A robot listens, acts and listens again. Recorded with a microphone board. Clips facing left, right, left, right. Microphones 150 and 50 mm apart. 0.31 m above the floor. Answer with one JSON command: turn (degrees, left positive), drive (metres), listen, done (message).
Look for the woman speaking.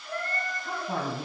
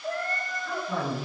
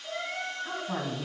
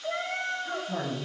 {"turn": 50}
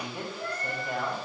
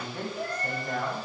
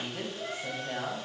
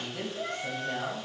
{"turn": 10}
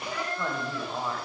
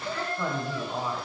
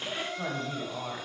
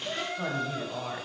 {"done": "Found it: a woman speaking, straight ahead, 1 to 2 m away."}